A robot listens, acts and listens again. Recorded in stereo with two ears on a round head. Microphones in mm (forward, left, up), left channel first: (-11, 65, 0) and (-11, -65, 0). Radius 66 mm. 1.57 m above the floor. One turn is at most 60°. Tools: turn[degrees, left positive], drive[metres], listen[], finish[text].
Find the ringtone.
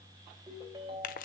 Thought: The ringtone: about 30° right or 150° right.
Action: turn[-30]
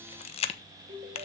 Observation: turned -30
Thought: So it is at 115° right.
Action: turn[-60]
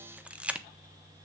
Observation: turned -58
Thought: Nothing new. It was at 55° right.
Action: turn[-55]
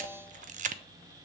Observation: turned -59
Action: listen[]
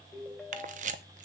Action: finish[Facing the ringtone, 2 to 4 m away.]